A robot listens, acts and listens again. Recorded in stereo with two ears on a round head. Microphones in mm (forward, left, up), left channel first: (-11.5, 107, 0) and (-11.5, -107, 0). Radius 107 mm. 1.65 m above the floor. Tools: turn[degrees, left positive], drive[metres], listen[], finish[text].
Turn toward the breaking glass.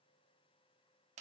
Action: listen[]
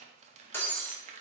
Action: turn[30]
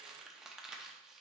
Action: listen[]
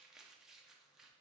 Action: finish[I heard breaking glass, but can't make it out now. It was about 20° right or 140° left.]